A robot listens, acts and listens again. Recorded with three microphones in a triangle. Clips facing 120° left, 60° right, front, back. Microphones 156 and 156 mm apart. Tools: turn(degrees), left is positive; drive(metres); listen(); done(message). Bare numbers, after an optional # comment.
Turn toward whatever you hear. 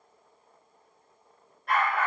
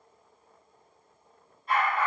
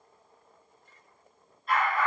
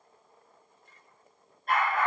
# The dog barking: 140° left.
turn(140)
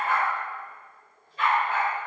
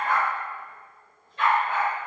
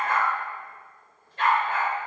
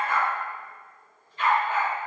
# The dog barking is now 35° left.
turn(35)
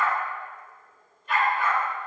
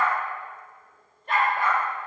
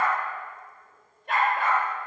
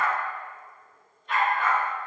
# The dog barking is now 20° right.
turn(-20)
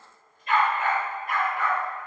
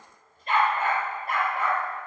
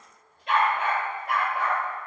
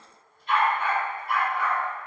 done("Found it: a dog barking, straight ahead, over 4 m away.")